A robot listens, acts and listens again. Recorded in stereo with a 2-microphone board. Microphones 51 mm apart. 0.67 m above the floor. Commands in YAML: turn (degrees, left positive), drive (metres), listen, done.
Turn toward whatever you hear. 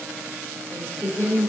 turn: 40
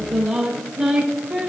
turn: -15
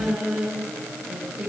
turn: -15
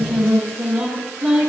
done: "Found it: singing, straight ahead."